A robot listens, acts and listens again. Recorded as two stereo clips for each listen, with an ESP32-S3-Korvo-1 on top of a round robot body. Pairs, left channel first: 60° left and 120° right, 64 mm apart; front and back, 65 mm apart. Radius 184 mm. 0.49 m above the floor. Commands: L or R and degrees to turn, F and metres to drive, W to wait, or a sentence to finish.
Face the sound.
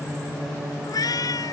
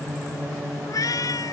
L30
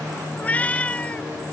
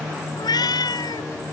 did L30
R10
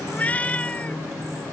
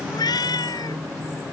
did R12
R10
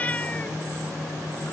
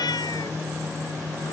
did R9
R10
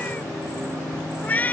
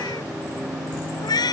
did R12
Facing the cat meowing.